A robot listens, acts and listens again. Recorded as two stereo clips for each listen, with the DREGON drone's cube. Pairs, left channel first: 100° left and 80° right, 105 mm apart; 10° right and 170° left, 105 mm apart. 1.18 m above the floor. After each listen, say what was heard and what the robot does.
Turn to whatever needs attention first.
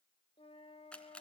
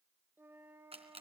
Keep listening.
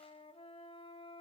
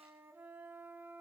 Keep listening.
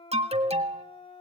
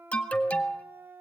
The alarm: 90° right. Turn 90° right.
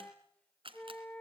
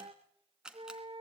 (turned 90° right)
Keep listening.
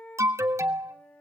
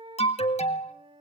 The alarm is now 15° right. Turn 15° right.
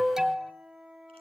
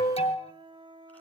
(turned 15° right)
Facing the alarm, 1 to 2 m away.